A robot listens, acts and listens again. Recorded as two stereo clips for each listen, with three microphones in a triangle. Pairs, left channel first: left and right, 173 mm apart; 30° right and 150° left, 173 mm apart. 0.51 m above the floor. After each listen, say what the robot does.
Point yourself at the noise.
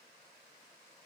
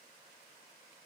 Keep listening.
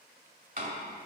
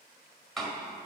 Turn 120° right.
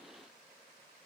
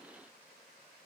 I heard a door slam from this way, but can't make it out now.